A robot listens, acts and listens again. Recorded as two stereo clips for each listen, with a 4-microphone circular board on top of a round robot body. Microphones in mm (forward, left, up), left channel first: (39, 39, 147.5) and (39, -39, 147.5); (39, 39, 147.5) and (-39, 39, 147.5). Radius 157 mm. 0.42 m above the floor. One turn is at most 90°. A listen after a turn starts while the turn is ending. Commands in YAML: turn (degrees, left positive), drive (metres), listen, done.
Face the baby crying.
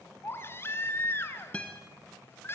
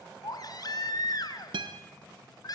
turn: 30
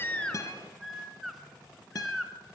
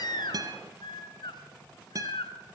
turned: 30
done: "Facing the baby crying."